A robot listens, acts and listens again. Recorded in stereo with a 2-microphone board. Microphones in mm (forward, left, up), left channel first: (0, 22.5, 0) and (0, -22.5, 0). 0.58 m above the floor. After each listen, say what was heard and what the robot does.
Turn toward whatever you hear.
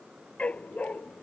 The dog barking: about 30° left or 150° left. Turn 30° left.
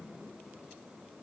Keep listening.
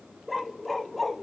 Facing the dog barking.